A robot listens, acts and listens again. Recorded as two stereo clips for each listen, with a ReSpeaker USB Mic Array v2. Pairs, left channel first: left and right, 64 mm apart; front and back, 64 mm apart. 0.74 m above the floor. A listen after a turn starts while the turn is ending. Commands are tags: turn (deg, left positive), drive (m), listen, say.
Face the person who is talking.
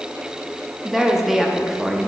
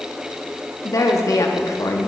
<say>Facing the woman speaking.</say>